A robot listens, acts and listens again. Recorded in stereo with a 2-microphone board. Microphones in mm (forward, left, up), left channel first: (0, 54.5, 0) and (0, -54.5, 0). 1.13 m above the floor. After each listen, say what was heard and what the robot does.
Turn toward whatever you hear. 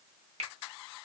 Turn 90° right.
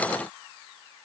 Keep listening.
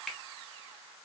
Found it: a finger snap, straight ahead, 1 to 2 m away.